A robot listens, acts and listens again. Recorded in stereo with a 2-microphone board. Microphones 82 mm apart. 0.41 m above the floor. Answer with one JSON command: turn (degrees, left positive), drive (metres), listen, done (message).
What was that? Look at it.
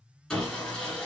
{"turn": 30}
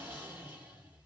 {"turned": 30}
{"turn": -20}
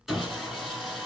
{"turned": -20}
{"done": "Found it: sawing, straight ahead, 1 to 2 m away."}